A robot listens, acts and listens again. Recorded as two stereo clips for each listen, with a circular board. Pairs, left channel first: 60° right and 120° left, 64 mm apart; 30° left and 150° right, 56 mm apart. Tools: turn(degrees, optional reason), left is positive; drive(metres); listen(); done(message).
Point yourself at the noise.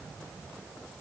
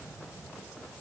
listen()
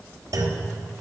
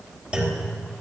turn(degrees=135, reason="The clunk: 135° left.")
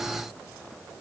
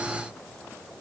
done("Facing where the clunk came from. I can't hear it now.")